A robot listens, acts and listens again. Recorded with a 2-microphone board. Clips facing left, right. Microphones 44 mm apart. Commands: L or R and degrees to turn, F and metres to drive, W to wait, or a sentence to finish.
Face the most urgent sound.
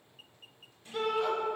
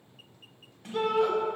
R30
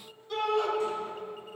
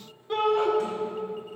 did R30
R145
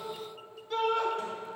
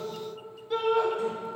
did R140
Found it: a shout, straight ahead.